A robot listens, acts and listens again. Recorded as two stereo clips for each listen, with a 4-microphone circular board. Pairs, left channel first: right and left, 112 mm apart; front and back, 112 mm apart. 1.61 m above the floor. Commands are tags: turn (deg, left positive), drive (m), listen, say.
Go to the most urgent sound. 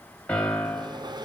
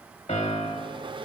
<listen/>
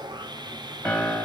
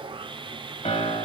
<listen/>
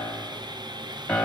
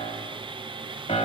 <say>I can't make out anything urgent to turn to.</say>